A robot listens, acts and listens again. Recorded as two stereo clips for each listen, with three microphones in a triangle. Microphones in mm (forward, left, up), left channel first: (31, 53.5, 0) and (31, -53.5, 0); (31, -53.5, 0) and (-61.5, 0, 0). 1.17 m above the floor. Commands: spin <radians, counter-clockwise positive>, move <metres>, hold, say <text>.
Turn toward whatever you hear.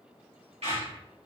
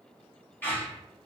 spin -1.75
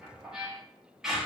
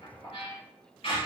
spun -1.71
say Found it: a squeak, straight ahead, 1 to 2 m away.